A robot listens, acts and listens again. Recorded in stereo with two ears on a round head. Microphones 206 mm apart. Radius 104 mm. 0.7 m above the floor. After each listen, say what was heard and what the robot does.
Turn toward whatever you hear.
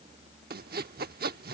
The sawing: about 45° right or 135° right. Turn 45° right.
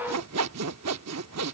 So it is at 90° right. Turn 90° right.
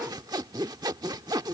The sawing is now 15° right. Turn 15° right.
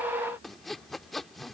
Found it: sawing, straight ahead.